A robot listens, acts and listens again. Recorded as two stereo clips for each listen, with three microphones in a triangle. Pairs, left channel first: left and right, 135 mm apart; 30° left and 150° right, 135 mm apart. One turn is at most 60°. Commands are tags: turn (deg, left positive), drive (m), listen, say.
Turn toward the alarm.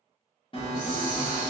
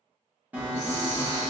<turn deg="60"/>
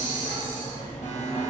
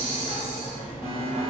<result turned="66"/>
<turn deg="60"/>
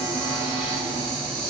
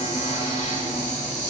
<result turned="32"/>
<turn deg="35"/>
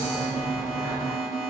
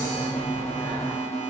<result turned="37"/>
<say>Found it: an alarm, straight ahead.</say>